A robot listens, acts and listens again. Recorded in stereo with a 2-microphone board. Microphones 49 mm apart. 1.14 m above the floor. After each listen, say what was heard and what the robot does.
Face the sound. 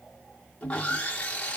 The sawing: about 25° left or 155° left. Turn 25° left.
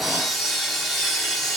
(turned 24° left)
Facing the sawing, under 1 m away.